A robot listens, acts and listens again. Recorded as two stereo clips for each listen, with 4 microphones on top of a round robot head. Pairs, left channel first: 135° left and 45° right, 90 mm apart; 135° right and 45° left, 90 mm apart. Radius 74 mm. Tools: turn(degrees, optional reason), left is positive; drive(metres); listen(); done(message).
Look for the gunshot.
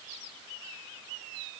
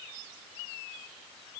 listen()
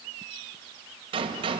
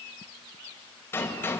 turn(degrees=-70, reason="The gunshot: 70° right.")
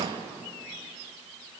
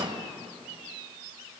done("Facing the gunshot, 2 to 4 m away.")